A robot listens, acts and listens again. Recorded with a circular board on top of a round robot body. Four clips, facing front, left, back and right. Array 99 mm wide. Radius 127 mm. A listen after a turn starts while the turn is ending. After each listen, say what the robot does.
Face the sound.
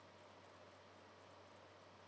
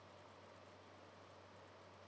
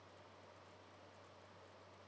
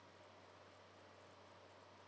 Keep listening.
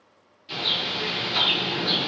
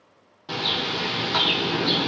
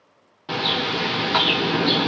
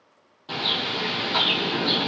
Turn 170° left.
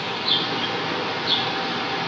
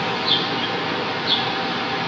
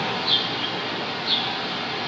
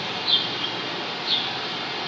Turn 55° left.
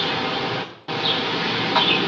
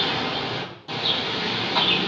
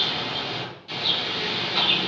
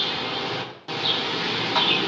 Turn 15° right.
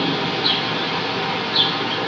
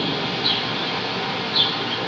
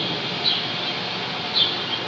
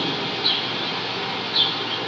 Facing the bird, 1 to 2 m away.